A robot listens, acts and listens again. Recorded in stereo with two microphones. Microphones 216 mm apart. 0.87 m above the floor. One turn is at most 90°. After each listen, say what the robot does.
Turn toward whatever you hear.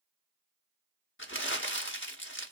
Turn 75° left.
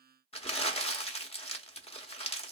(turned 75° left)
Turn 30° left.
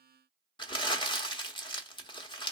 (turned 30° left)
Turn 25° left.
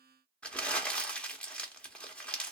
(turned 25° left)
Found it: crumpling, straight ahead, 1 to 2 m away.